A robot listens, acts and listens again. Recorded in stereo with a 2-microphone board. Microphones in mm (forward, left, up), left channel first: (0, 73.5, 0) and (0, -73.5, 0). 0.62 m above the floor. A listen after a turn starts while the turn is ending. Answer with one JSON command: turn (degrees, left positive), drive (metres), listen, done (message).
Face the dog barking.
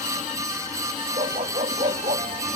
{"turn": -50}
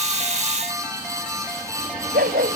{"turn": -75}
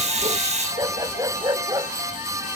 {"turn": -25}
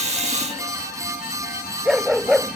{"done": "Facing the dog barking."}